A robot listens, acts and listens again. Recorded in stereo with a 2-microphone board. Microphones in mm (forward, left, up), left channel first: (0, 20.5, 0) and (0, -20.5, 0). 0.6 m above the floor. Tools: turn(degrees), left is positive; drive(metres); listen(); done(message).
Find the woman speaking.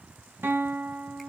listen()
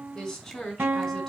turn(degrees=30)
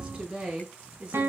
turn(degrees=-30)
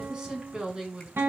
turn(degrees=-20)
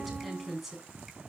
done("Facing the woman speaking.")